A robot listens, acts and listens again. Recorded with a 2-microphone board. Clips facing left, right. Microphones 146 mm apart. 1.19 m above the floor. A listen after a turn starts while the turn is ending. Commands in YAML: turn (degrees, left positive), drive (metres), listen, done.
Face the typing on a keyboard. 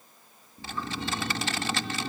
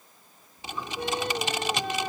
turn: -20
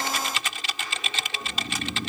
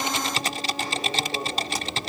turn: -140
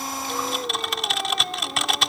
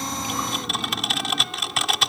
done: "Found it: typing on a keyboard, straight ahead."